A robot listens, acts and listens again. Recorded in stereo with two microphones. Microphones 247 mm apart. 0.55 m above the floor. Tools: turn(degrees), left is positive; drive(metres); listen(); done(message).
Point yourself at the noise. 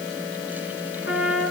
turn(degrees=60)
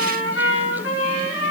turn(degrees=60)
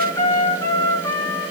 turn(degrees=15)
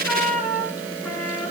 done("Found it: a trumpet, straight ahead, over 4 m away.")